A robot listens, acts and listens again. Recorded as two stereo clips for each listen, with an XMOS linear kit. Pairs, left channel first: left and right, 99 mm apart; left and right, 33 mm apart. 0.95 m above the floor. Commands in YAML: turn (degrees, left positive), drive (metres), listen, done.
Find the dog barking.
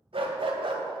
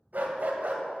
turn: -55
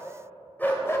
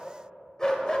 turn: 25
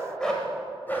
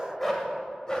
turn: 20
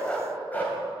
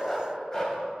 turn: 20
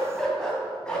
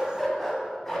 turn: 10
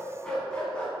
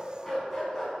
turn: 10
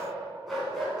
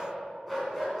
done: "Found it: a dog barking, straight ahead, 2 to 4 m away."